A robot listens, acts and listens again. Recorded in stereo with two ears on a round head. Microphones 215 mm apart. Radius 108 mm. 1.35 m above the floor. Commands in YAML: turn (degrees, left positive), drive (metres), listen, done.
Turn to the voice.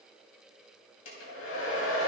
listen: true
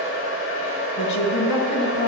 turn: 60
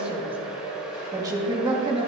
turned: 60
turn: -20
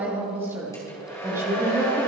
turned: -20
turn: -10
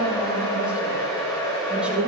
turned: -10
done: "Facing the woman speaking."